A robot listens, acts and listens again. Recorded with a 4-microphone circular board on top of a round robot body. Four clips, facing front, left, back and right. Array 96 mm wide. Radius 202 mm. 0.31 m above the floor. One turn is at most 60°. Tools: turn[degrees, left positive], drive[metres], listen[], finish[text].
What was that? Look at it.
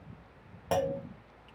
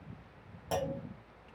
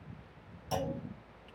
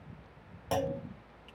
Thought: The clunk: 10° right.
Action: turn[-10]
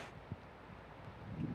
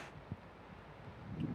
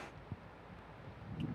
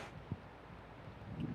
Action: finish[Facing where the clunk came from. I can't hear it now.]